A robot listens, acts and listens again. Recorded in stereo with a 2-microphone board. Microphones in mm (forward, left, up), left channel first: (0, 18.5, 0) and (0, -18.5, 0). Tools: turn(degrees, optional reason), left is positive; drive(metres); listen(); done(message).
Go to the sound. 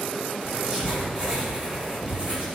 turn(degrees=-30, reason="The writing: about 30° right or 150° right.")
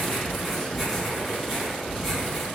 drive(metres=1.0)
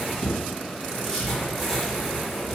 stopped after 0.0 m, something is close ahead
done("Blocked. The writing is further on, straight ahead.")